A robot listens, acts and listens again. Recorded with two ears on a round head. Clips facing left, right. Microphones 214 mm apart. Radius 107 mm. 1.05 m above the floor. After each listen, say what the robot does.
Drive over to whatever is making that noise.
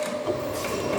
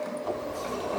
Turn 40° left.
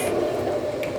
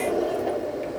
Drive 1.0 m forward.
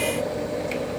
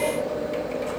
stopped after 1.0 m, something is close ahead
I am next to the sliding door.